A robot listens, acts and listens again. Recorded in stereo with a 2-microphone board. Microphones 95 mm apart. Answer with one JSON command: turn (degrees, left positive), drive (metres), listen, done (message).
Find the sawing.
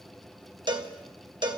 {"listen": true}
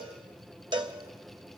{"listen": true}
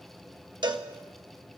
{"done": "I can't make out sawing to turn to."}